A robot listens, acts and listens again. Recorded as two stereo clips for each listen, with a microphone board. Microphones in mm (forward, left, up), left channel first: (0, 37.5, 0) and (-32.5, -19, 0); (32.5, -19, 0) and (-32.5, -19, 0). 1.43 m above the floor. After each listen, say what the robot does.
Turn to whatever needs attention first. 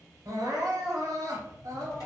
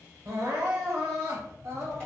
Turn 140° right.
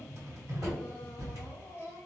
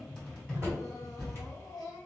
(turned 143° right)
Facing the crying.